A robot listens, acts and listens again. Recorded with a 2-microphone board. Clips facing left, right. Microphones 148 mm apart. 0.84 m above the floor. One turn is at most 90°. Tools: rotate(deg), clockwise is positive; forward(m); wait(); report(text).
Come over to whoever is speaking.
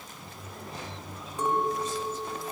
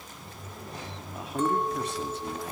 rotate(65)
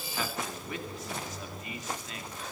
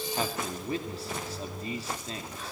rotate(35)
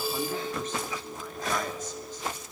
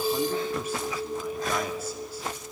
wait()
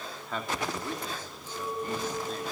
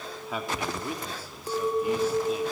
rotate(10)
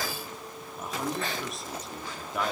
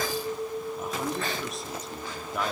forward(1.0)
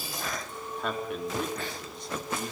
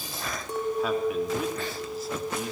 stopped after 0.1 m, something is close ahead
report("Something is in my way. I am facing the man speaking but have not reached it.")